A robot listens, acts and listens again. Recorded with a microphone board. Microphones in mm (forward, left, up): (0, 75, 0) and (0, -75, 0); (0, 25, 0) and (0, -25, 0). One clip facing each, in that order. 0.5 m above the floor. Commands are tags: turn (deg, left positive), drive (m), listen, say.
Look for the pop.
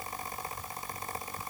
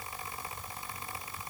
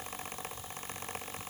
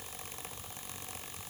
<listen/>
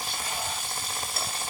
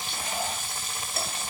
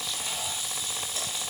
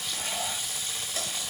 <listen/>
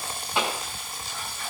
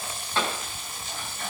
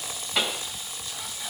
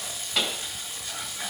<turn deg="30"/>
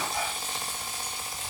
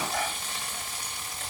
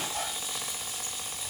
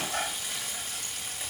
<listen/>
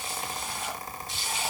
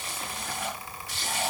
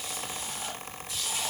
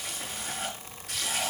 <say>I heard a pop, but can't make it out now. It was about 20° right or 140° left.</say>